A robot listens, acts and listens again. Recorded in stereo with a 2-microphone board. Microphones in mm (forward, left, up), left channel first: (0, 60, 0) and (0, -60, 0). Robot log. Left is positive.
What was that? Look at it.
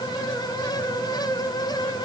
cmd idle
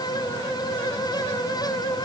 cmd idle
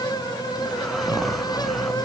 cmd yaw +30
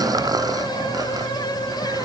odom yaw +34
note: So it is at 30° right.
cmd yaw -30
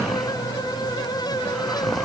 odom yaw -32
end: Facing the snoring.